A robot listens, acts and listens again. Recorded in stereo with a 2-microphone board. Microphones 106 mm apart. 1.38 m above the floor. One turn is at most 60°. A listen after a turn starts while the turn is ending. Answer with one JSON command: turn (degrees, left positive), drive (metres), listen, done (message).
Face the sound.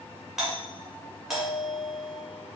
{"turn": -30}
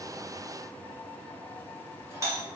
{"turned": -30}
{"turn": -60}
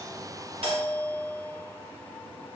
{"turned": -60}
{"turn": -60}
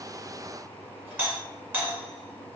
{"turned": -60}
{"turn": -25}
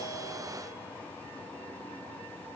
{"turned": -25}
{"listen": true}
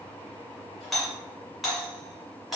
{"done": "Facing the doorbell."}